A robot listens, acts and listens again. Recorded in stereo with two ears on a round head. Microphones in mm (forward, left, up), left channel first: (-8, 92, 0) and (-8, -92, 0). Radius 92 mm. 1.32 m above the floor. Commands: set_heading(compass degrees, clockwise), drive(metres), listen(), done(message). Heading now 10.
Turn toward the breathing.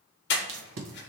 set_heading(315)
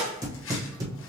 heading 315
listen()
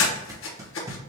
set_heading(245)
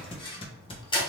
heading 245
set_heading(220)
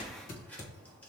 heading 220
listen()
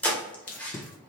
done("Facing the breathing.")